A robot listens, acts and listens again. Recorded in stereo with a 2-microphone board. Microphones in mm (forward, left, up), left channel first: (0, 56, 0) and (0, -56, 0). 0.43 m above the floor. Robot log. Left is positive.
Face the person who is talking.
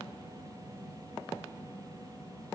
cmd idle
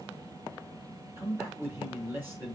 note: The man speaking: about 20° right or 160° right.
cmd yaw -20
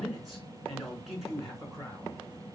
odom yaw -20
end: Found it: a man speaking, straight ahead.